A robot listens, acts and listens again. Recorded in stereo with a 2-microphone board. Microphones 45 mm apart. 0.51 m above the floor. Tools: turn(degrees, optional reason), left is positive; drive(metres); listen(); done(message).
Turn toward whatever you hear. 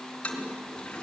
turn(degrees=25, reason="The toilet flushing: about 25° left or 155° left.")
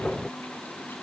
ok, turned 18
listen()
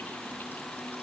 listen()
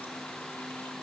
done("I heard a toilet flushing, but can't make it out now. It was about 5° left or 135° left.")